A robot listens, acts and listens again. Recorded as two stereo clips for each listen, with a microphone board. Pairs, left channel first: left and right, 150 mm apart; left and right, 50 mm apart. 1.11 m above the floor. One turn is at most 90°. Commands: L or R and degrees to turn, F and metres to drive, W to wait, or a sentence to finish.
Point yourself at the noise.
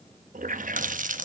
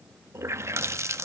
R60
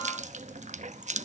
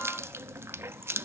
R55
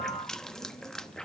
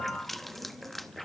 Found it: a running tap, straight ahead, under 1 m away.